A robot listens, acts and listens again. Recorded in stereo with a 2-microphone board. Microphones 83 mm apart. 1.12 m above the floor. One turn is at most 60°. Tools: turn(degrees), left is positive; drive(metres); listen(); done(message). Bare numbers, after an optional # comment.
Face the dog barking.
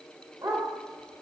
# The dog barking: about 55° right or 125° right.
turn(-55)
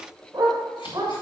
# So it is at 50° right.
turn(-50)
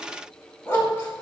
# The dog barking is now 20° left.
turn(20)
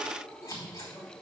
listen()
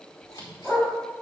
done("Found it: a dog barking, straight ahead, 2 to 4 m away.")